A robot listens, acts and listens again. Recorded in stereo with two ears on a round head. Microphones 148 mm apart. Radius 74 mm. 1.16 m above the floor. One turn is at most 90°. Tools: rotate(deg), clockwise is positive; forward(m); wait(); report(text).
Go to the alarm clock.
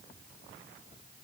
wait()
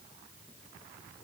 wait()
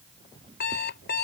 rotate(-70)
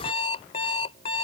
rotate(-35)
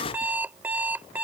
rotate(10)
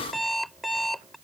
forward(1.0)
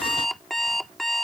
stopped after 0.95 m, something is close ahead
report("Arrived at the alarm clock, straight ahead.")